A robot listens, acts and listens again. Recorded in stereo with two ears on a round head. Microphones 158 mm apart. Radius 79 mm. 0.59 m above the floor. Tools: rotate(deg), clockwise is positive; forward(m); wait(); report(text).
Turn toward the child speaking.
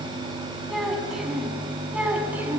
rotate(30)
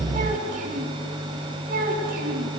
rotate(125)
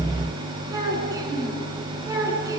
rotate(20)
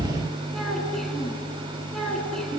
report("Facing the child speaking, over 4 m away.")